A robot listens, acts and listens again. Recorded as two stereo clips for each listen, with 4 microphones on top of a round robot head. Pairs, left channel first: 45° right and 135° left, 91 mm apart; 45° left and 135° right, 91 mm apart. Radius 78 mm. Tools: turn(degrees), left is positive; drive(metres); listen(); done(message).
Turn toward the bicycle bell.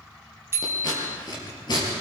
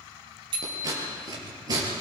turn(degrees=-165)
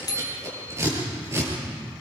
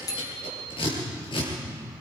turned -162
done("Facing the bicycle bell, 2 to 4 m away.")